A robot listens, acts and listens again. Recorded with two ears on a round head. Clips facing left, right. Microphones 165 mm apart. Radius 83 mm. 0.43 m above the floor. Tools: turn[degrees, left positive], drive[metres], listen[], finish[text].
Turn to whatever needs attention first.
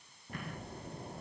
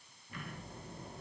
Action: listen[]
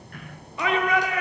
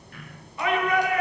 Thought: The shout: about 65° left or 115° left.
Action: turn[65]
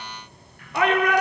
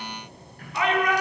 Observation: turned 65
Thought: So it is at 45° left.
Action: turn[45]
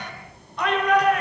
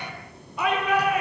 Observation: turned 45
Action: finish[Found it: a shout, straight ahead, over 4 m away.]